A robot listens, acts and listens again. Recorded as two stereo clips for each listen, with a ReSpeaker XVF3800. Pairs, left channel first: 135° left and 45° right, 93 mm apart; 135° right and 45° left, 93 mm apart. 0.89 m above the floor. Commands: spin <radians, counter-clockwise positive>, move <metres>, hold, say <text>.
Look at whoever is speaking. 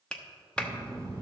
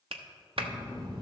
spin 0.26
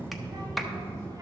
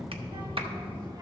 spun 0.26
spin 0.26
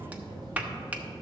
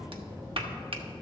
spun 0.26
say Found it: a child speaking, straight ahead.